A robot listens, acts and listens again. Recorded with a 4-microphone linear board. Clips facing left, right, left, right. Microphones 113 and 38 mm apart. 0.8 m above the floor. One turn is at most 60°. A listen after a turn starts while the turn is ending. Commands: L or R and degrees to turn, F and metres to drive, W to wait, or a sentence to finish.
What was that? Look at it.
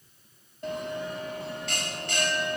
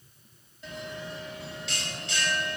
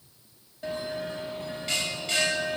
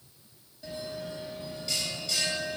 L50
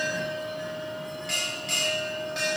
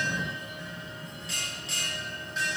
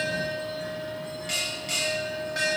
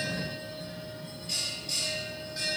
L60
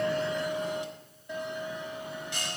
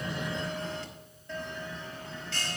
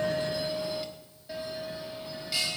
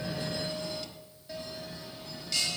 L15
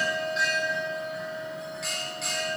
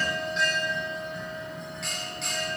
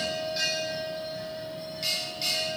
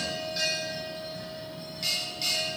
Found it: a bell, straight ahead.